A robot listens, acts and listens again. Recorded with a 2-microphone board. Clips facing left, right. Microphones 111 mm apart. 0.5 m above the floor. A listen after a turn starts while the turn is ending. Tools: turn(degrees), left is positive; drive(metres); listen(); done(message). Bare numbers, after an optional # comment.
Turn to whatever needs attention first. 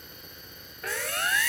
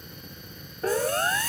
# The siren: about 30° right or 150° right.
turn(-30)
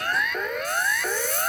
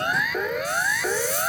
done("Facing the siren.")